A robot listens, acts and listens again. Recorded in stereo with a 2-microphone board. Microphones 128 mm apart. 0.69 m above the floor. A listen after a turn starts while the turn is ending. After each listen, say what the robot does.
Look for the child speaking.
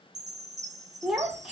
Turn 30° right.
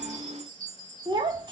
Turn 145° right.
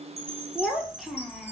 Found it: a child speaking, straight ahead, under 1 m away.